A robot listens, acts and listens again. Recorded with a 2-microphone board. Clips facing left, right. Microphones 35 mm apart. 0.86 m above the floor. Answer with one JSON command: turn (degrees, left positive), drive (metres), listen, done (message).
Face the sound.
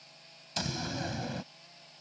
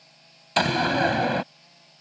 {"turn": -60}
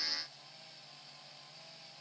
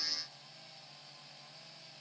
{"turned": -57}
{"listen": true}
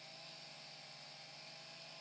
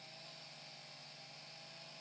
{"done": "I heard a door slam, but can't make it out now. It was about 5° right or 65° right."}